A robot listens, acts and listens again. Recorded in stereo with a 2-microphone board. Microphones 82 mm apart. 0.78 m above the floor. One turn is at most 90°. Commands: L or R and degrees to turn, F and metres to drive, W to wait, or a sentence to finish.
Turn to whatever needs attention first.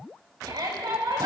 R90
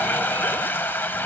W
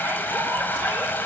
W
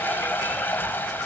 I heard a shout from this way, but can't make it out now.